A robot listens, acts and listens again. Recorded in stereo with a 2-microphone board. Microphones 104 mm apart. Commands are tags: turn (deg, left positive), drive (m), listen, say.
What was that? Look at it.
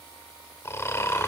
<turn deg="25"/>
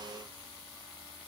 <listen/>
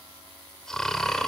<say>Found it: snoring, straight ahead, 2 to 4 m away.</say>